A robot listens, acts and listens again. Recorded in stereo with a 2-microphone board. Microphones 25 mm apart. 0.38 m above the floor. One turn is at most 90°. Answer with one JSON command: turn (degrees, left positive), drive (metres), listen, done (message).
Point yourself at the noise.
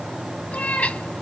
{"turn": 75}
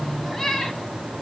{"done": "Found it: a cat meowing, straight ahead, 1 to 2 m away."}